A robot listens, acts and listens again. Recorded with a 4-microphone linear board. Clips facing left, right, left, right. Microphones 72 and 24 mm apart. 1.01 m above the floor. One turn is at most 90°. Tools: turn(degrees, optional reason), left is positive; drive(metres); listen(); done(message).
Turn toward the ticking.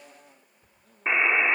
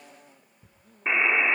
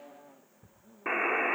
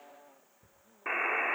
turn(degrees=-35, reason="The ticking: about 35° right or 145° right.")
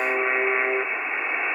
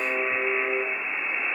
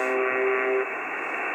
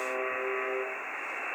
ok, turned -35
listen()
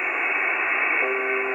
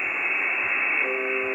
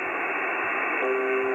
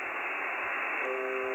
listen()
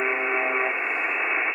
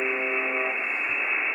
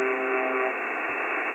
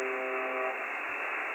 done("I heard ticking, but can't make it out now. It was about straight ahead or 110° right.")